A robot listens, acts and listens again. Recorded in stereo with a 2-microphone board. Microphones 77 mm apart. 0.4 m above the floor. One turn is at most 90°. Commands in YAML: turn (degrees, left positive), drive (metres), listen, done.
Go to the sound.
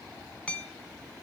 turn: 30
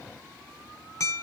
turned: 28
turn: 90
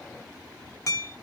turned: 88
turn: 45
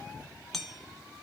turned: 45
drive: 1.0
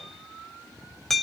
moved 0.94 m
drive: 1.0
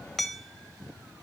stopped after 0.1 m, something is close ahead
done: "I am next to the hammering."